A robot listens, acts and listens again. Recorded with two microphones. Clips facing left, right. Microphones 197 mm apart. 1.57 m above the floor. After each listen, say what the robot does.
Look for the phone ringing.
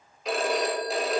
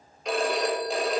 Turn 30° left.
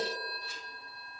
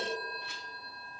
Turn 150° left.
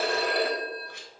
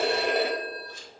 Turn 20° right.
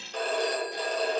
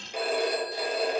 Turn 10° right.
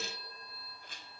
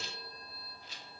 Keep listening.
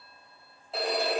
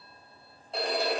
Found it: a phone ringing, straight ahead.